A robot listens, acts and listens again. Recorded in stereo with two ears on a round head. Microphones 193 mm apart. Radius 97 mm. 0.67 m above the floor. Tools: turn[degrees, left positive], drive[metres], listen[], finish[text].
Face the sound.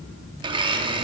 Thought: The blender: about 25° right or 155° right.
Action: turn[-25]
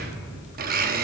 Thought: So it is at 125° right.
Action: turn[-125]
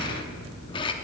Thought: The blender is now 25° left.
Action: turn[25]
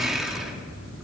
Action: finish[Facing the blender, under 1 m away.]